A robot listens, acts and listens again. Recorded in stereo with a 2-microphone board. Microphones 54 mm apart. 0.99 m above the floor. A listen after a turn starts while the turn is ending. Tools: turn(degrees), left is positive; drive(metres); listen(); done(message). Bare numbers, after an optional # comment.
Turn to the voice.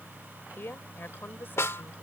# The woman speaking: about 45° left or 135° left.
turn(45)
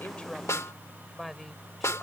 done("Found it: a woman speaking, straight ahead.")